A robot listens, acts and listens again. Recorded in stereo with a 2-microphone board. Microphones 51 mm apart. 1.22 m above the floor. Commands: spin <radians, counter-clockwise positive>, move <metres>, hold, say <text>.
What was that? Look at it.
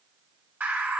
spin -0.61
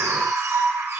spin -1.83
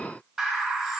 say Facing the bird, 1 to 2 m away.